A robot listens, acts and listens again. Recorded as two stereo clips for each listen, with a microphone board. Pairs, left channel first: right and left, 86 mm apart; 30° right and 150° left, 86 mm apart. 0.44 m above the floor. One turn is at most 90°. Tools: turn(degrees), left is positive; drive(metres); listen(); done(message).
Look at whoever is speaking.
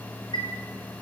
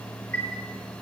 listen()
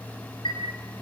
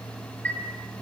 listen()
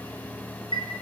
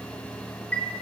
done("I can't make out anyone speaking to turn to.")